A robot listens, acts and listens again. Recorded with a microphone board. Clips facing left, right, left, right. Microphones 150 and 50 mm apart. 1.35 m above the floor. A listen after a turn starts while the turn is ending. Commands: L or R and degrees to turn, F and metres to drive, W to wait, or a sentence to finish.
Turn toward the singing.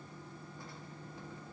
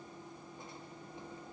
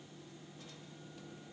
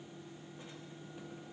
W
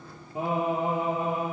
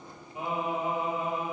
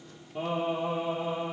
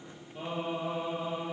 L45
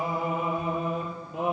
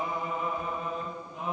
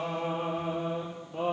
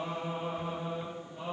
L105
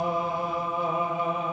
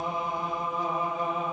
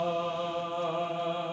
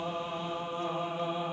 L15
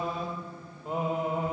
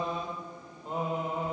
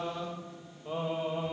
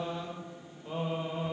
Found it: singing, straight ahead, over 4 m away.